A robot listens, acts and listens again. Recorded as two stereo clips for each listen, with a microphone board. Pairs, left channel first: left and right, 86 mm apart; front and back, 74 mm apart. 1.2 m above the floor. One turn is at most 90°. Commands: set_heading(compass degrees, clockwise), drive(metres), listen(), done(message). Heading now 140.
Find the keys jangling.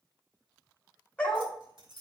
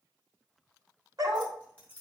set_heading(215)
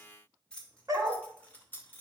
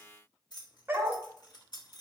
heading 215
set_heading(190)
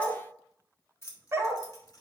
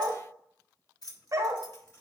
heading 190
set_heading(155)
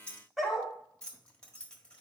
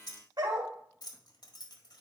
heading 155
set_heading(140)
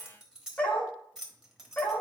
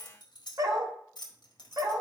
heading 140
done("Facing the keys jangling, 1 to 2 m away.")